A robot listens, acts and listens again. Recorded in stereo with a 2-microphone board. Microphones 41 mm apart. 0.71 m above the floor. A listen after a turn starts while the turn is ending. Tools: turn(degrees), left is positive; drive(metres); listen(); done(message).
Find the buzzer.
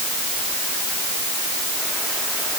listen()
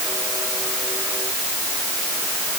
listen()
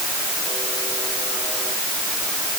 done("I can't make out a buzzer to turn to.")